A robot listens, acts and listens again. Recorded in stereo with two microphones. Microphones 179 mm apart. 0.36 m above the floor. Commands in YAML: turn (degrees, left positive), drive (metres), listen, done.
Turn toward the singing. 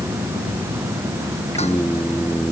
turn: 15
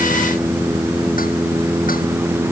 turn: -30
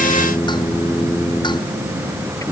turn: 20
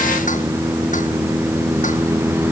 done: "Facing the singing."